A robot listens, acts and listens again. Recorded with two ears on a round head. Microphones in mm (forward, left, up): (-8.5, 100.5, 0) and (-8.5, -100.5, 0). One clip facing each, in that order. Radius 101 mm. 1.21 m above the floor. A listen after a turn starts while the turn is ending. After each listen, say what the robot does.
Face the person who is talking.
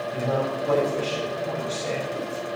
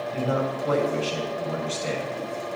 Turn 30° right.
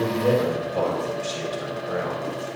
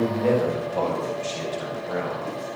Turn 15° left.
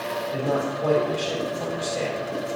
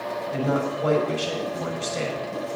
Found it: a man speaking, straight ahead, over 4 m away.